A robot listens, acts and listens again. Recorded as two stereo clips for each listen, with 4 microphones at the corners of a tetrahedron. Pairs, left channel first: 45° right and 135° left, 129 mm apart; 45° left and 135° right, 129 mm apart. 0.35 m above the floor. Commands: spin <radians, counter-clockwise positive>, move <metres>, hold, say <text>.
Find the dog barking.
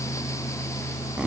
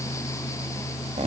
hold
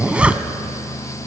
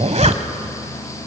hold
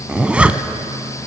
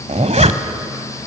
say I can't make out a dog barking to turn to.